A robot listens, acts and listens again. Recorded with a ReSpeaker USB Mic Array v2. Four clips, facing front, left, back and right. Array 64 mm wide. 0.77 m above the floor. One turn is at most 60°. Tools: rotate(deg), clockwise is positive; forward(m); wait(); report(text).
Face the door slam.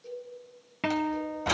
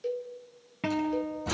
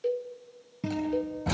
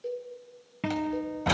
rotate(60)
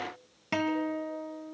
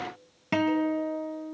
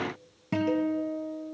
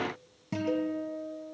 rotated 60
report("I heard a door slam from this way, but can't make it out now.")